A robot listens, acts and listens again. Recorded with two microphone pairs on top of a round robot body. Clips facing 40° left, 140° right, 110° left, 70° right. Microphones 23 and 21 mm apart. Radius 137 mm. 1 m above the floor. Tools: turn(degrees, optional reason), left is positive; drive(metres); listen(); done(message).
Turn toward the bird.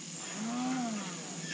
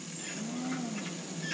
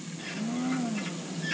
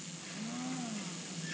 turn(degrees=160, reason="The bird: 160° left.")
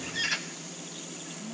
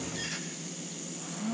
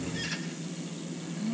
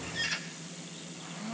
turn(degrees=10, reason="The bird is now 10° left.")
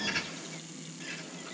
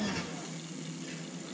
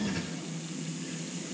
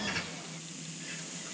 listen()
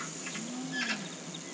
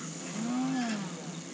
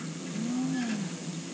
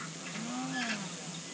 listen()
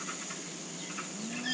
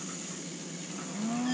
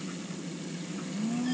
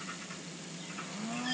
done("Facing where the bird came from. I can't hear it now.")